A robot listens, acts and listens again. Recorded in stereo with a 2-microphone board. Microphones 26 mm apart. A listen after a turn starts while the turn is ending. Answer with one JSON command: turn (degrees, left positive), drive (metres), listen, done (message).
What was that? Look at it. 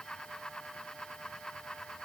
{"listen": true}
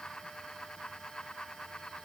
{"listen": true}
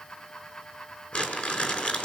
{"turn": 60}
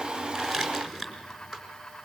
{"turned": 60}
{"turn": 10}
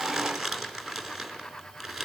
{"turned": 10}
{"done": "Found it: crumpling, straight ahead, over 4 m away."}